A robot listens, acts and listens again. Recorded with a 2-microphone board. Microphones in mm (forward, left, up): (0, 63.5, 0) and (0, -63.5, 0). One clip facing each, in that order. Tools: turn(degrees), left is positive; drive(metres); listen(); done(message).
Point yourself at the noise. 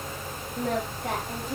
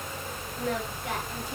turn(degrees=55)
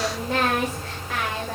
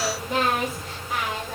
turn(degrees=75)
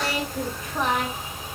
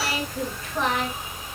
turn(degrees=15)
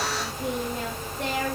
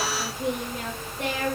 done("Facing the singing.")